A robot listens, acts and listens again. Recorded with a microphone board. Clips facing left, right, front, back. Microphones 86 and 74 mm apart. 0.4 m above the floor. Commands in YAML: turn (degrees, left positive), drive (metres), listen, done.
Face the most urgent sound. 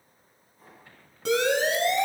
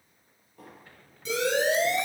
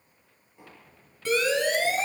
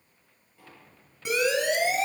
turn: 105
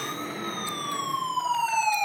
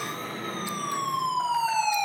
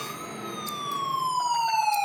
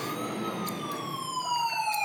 turn: -15
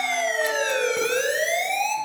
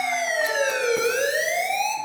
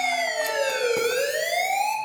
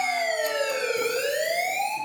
done: "Found it: a siren, straight ahead."